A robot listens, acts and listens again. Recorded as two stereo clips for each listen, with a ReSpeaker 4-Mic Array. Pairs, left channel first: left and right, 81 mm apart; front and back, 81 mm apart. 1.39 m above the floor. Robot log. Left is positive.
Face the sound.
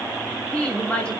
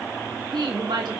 note: The woman speaking: 165° left.
cmd yaw +165
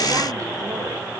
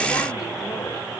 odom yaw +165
cmd idle
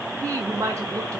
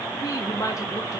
note: The woman speaking is now 45° right.
cmd yaw -45
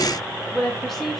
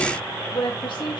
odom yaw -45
end: Facing the woman speaking, 2 to 4 m away.